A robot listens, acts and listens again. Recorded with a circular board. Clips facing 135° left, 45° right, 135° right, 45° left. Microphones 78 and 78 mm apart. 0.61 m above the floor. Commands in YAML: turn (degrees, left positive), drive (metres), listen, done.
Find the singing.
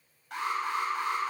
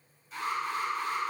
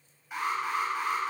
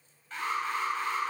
listen: true
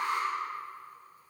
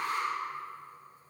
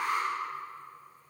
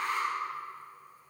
listen: true
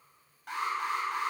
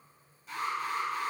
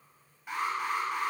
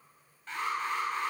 done: "I can't make out singing to turn to."